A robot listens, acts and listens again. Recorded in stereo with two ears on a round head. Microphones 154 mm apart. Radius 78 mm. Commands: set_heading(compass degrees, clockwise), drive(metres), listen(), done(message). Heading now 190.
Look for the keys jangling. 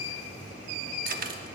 set_heading(240)
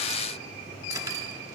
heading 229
listen()
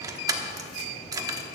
set_heading(249)
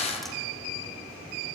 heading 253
done("Facing the keys jangling.")